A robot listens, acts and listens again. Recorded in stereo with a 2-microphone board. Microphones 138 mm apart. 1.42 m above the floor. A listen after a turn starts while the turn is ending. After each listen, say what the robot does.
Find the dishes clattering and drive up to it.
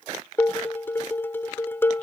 Turn 15° left.
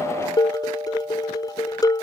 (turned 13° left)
Turn 150° left.
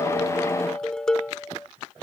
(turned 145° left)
Drive 1.0 m forward.
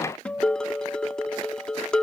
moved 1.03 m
Drive 1.0 m forward.
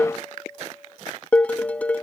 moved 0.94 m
Turn 10° left.
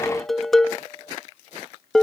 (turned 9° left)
Drive 1.0 m forward.
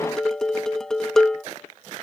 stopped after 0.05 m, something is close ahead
I am next to the dishes clattering.